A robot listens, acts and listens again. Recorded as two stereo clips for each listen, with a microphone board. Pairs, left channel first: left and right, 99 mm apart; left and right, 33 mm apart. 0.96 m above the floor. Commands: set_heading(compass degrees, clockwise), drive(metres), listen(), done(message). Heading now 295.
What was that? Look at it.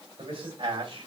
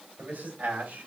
set_heading(0)
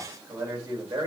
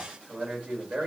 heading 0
set_heading(40)
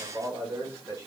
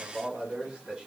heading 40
set_heading(70)
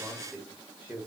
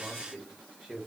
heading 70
set_heading(90)
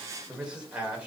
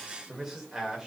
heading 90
set_heading(105)
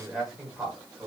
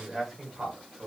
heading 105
done("Found it: a man speaking, straight ahead, 1 to 2 m away.")